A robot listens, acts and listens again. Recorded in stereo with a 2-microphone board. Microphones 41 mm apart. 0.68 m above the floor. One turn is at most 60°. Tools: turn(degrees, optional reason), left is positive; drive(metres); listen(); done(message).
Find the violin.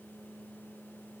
listen()
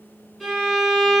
turn(degrees=-30)
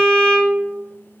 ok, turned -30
turn(degrees=20, reason="So it is at 20° left.")
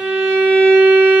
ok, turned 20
done("Found it: a violin, straight ahead, 1 to 2 m away.")